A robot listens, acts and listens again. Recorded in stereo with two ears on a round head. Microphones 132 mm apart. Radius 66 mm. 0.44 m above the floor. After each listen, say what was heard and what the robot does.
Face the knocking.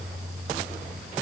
Keep listening.
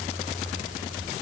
Keep listening.
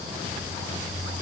I can't make out knocking to turn to.